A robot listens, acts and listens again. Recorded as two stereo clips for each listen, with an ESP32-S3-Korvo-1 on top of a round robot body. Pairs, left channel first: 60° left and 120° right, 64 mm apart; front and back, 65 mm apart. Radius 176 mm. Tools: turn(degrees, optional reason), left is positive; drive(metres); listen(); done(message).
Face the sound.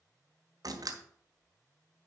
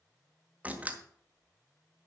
turn(degrees=-115, reason="The door slam: 115° right.")
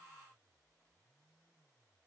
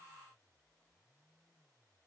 done("Facing where the door slam came from. I can't hear it now.")